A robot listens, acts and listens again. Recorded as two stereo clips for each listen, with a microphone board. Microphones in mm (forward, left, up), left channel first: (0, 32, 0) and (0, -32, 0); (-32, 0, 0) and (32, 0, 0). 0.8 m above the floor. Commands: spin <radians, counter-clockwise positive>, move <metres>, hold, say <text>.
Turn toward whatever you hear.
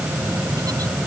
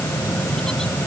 hold
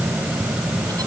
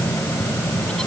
hold
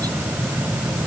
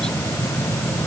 say I can't make out anything to turn to.